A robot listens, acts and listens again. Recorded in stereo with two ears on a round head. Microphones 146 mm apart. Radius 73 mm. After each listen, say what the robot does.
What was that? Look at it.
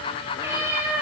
Turn 30° right.
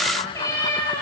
Turn 20° left.
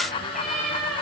Found it: a cat meowing, straight ahead, over 4 m away.